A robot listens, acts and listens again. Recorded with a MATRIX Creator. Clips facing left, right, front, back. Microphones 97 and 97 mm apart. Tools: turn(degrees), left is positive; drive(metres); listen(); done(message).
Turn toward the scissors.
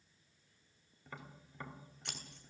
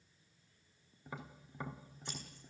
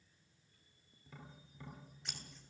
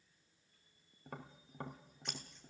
turn(degrees=90)
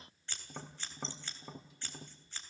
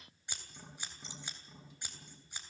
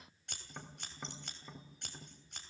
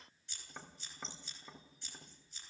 turn(degrees=-15)
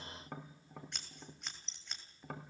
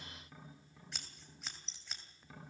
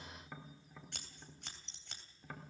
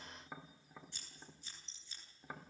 done("Facing the scissors, 2 to 4 m away.")